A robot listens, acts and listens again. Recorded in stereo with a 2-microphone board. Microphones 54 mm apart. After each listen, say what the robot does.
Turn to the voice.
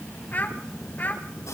Turn 35° left.
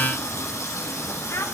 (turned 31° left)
Turn 110° left.
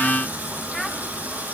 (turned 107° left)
Keep listening.
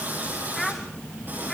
Found it: a child speaking, straight ahead.